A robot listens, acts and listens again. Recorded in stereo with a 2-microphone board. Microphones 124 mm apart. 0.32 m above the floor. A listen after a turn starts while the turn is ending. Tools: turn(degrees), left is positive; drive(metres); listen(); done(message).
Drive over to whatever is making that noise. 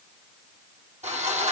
turn(degrees=-90)
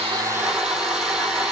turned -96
drive(metres=1.0)
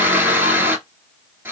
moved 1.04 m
turn(degrees=-20)
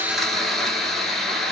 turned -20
drive(metres=1.0)
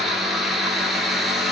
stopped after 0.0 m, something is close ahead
done("Arrived at the sawing, straight ahead.")